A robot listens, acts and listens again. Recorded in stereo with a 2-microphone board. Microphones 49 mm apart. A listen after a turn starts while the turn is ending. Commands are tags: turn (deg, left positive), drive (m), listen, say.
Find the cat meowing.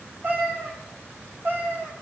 <turn deg="-45"/>
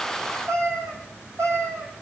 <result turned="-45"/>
<turn deg="-90"/>
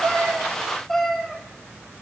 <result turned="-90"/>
<turn deg="10"/>
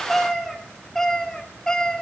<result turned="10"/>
<turn deg="15"/>
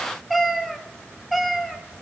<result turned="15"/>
<say>Found it: a cat meowing, straight ahead, 1 to 2 m away.</say>